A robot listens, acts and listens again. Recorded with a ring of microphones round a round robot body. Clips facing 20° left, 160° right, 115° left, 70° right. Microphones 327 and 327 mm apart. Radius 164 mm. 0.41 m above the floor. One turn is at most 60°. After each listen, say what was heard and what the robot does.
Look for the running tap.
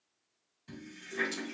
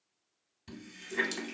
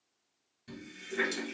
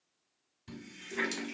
The running tap: 140° right. Turn 60° right.
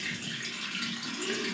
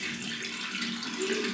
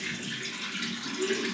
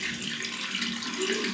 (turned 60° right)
The running tap is now 90° right. Turn 60° right.
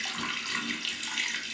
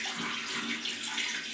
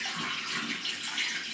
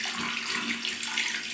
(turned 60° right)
The running tap is now 35° right. Turn 35° right.
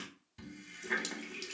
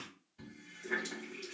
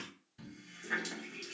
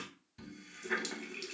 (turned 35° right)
Found it: a running tap, straight ahead.